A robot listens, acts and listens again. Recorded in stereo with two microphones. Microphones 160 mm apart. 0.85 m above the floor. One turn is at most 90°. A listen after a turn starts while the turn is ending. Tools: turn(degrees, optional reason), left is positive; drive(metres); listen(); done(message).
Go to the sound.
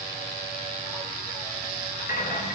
turn(degrees=65, reason="The rattle: about 65° left or 115° left.")
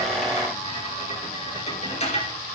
turn(degrees=45, reason="So it is at 45° left.")
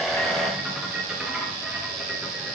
drive(metres=1.0)
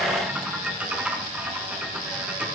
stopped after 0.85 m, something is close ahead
turn(degrees=-10, reason="The rattle is now 10° right.")
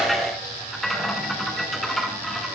done("I am next to the rattle.")